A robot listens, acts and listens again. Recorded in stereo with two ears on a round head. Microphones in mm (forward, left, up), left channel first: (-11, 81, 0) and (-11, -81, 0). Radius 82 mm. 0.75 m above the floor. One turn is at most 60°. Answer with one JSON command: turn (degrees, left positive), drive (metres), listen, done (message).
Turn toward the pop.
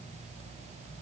{"listen": true}
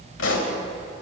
{"turn": 60}
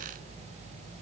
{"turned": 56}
{"turn": 35}
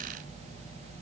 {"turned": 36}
{"done": "I heard a pop from this way, but can't make it out now."}